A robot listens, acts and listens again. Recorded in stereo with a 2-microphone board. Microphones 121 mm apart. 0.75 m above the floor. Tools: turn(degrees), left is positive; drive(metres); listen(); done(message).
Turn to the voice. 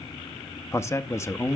turn(degrees=25)
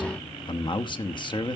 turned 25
turn(degrees=130)
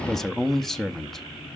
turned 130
done("Facing the man speaking.")